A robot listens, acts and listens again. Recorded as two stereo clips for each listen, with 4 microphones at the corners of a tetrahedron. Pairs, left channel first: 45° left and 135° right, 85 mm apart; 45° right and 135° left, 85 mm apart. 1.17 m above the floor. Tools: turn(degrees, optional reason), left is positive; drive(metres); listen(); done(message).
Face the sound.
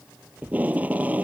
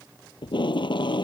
turn(degrees=-65, reason="The tape being pulled: 65° right.")
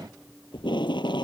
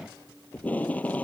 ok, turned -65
turn(degrees=30, reason="The tape being pulled is now 30° left.")
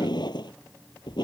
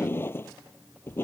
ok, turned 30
turn(degrees=20, reason="The tape being pulled is now 20° left.")
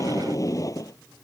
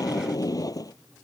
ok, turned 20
done("Found it: tape being pulled, straight ahead.")